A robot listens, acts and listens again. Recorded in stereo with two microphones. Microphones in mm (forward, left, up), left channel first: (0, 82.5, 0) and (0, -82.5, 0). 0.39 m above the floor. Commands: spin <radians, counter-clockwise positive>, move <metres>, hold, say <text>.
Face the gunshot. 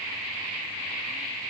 hold
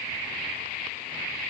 hold
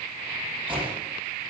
spin -0.52
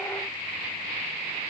hold
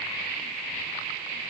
say I heard a gunshot, but can't make it out now. It was about straight ahead or 120° right.